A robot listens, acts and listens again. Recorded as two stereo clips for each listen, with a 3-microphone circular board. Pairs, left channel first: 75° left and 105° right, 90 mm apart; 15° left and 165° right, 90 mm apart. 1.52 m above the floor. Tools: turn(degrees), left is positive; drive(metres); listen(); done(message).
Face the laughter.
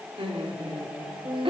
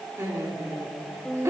turn(degrees=-105)
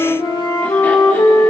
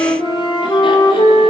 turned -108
listen()
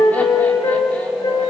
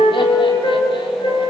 listen()
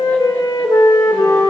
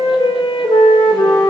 done("I heard laughter from this way, but can't make it out now.")